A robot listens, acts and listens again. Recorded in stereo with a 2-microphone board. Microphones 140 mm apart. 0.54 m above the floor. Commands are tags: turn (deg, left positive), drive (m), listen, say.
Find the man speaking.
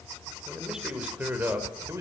<turn deg="-20"/>
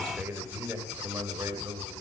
<turn deg="-25"/>
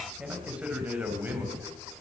<turn deg="-30"/>
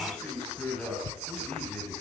<turn deg="10"/>
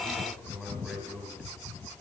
<say>Facing the man speaking, over 4 m away.</say>